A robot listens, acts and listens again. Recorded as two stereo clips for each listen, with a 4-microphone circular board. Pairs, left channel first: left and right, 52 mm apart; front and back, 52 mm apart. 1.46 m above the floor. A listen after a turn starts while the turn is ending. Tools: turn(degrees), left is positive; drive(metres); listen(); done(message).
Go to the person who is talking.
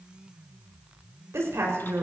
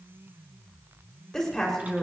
turn(degrees=-80)
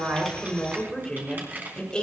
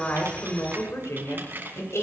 turn(degrees=20)
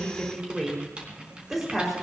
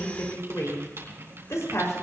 drive(metres=1.0)
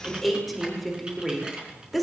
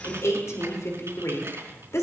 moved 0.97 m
drive(metres=1.0)
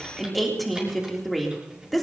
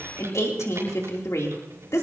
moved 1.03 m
drive(metres=1.0)
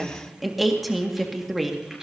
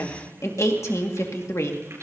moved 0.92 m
drive(metres=1.0)
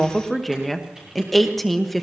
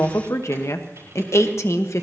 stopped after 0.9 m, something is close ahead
done("Arrived at the woman speaking, straight ahead.")